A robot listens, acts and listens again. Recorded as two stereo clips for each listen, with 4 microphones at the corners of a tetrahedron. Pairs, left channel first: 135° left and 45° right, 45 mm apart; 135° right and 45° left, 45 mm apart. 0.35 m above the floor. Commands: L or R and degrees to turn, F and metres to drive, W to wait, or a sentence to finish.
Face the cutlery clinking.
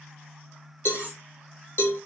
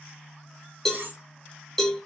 L15
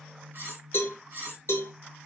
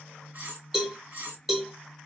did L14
Found it: cutlery clinking, straight ahead.